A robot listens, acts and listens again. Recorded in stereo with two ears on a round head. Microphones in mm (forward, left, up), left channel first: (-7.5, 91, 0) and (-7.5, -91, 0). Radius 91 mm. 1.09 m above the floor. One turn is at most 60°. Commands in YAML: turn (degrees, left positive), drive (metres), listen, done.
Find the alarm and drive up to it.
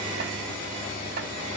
listen: true
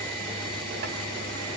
listen: true
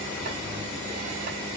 done: "I can't make out an alarm to turn to."